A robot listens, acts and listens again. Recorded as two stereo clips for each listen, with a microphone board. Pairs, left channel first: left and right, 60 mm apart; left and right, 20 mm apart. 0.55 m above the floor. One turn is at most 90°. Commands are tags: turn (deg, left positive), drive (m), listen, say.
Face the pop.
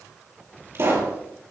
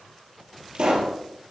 <turn deg="-45"/>
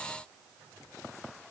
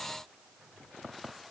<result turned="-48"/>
<listen/>
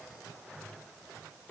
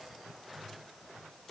<say>I heard a pop, but can't make it out now. It was about straight ahead or 85° right.</say>